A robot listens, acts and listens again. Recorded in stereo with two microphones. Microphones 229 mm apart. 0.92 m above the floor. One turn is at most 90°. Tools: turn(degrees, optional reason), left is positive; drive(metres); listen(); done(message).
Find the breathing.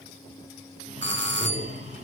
turn(degrees=-30, reason="The breathing: about 30° right or 150° right.")
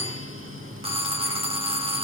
turn(degrees=-90, reason="So it is at 120° right.")
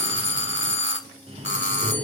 turn(degrees=-25, reason="The breathing is now 25° right.")
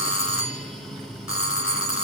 done("Facing the breathing.")